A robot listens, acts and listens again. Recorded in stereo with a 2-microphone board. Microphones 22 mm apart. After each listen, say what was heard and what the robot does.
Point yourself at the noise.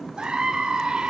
The scream: about 40° right or 140° right. Turn 40° right.
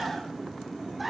Found it: a scream, straight ahead.